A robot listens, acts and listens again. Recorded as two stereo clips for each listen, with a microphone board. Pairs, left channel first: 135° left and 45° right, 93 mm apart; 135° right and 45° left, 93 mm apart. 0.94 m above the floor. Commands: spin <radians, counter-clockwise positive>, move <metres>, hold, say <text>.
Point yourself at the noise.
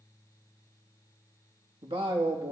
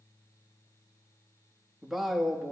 spin -0.87
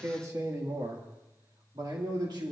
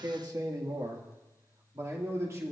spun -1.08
spin -0.17
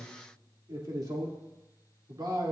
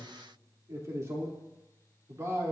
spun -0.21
spin -0.17
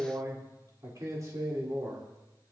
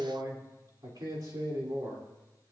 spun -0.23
say Facing the man speaking.